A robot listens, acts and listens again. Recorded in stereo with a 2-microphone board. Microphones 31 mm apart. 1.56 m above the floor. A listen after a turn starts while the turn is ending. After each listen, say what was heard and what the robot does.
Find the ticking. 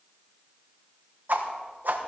Keep listening.
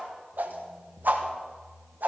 Keep listening.
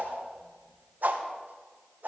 I can't make out ticking to turn to.